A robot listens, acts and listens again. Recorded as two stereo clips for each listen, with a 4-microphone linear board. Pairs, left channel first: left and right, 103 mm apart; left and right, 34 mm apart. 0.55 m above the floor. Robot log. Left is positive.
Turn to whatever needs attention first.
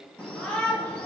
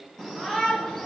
cmd yaw +30
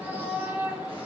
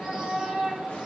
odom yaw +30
note: So it is at 20° right.
cmd yaw -20
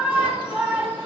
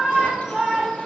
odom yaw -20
note: The shout is now 10° right.
cmd yaw -10
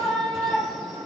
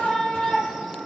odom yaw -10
end: Facing the shout.